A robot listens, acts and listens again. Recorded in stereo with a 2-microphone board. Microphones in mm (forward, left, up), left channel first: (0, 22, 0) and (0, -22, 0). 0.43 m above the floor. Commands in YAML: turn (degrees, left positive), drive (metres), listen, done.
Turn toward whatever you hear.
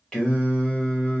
turn: 25
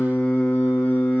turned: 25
turn: 35
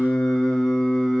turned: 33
turn: 10
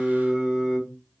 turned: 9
turn: -15
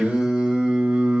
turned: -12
turn: -25
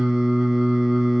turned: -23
done: "Found it: singing, straight ahead."